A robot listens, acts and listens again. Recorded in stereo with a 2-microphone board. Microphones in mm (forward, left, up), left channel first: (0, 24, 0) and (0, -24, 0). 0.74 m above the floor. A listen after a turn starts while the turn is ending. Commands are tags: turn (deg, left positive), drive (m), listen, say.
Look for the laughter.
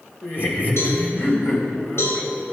<turn deg="40"/>
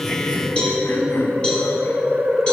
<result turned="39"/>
<turn deg="105"/>
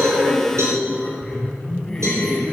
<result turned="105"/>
<say>Found it: laughter, straight ahead, over 4 m away.</say>